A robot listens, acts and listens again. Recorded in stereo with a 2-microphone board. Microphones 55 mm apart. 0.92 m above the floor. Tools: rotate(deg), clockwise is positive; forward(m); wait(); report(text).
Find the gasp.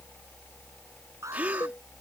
rotate(30)
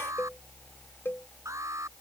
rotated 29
wait()
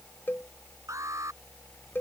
report("I heard a gasp, but can't make it out now. It was about straight ahead or 120° right.")